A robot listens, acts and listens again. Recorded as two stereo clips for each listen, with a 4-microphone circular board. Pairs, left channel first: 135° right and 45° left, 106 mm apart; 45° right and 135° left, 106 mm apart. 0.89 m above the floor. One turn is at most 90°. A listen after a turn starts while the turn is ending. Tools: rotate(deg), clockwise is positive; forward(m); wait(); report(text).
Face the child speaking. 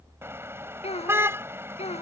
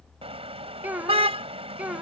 rotate(90)
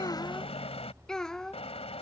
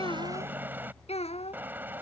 rotate(50)
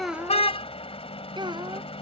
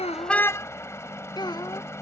report("Found it: a child speaking, straight ahead.")